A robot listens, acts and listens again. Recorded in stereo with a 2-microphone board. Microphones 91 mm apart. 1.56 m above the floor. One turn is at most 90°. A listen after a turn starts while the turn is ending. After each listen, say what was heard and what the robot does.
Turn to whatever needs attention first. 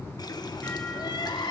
The crying: about 60° left or 120° left. Turn 60° left.
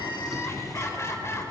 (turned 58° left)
So it is at 40° left. Turn 40° left.
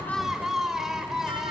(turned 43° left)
Facing the crying, 2 to 4 m away.